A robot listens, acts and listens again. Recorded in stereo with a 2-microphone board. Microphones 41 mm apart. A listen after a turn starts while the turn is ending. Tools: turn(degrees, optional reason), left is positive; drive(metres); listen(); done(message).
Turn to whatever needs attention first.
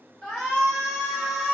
turn(degrees=30)
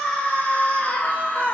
turn(degrees=140, reason="So it is at 140° left.")
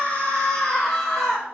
done("Facing the shout.")